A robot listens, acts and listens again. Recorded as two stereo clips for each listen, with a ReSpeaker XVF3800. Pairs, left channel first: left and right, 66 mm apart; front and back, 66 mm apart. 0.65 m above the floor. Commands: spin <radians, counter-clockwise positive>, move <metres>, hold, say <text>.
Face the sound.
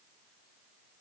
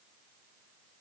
hold
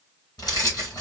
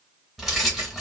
spin 1.57
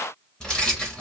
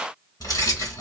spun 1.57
spin 0.17
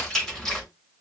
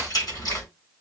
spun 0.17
say Found it: keys jangling, straight ahead.